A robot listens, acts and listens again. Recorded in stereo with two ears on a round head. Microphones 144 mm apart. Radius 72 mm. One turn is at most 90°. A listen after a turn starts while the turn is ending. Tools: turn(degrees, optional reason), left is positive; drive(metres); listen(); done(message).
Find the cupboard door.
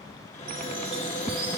turn(degrees=45, reason="The cupboard door: about 45° left or 135° left.")
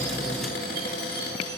turn(degrees=85, reason="So it is at 85° left.")
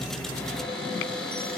done("Found it: a cupboard door, straight ahead.")